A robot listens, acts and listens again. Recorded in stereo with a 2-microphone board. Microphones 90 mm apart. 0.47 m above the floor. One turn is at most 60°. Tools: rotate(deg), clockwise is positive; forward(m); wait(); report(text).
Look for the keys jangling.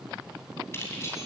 rotate(-30)
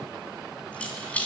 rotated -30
rotate(-15)
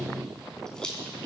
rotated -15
rotate(-10)
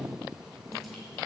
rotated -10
wait()
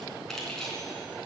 report("Found it: keys jangling, straight ahead.")